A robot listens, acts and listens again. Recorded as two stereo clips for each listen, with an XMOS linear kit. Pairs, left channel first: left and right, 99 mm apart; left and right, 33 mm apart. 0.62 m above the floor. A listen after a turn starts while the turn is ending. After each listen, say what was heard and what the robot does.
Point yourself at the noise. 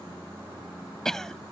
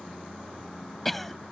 Turn 30° left.
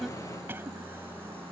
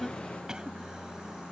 Keep listening.
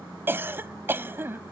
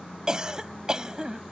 So it is at 20° right. Turn 20° right.
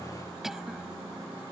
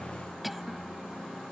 Facing the cough.